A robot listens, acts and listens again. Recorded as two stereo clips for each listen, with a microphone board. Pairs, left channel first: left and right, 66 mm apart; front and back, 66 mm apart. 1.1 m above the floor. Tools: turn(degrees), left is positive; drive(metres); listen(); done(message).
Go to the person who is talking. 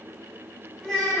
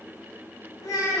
drive(metres=1.0)
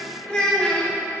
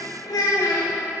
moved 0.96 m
turn(degrees=15)
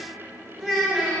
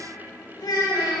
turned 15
drive(metres=1.0)
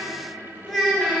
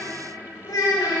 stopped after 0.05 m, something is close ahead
done("I am next to the child speaking.")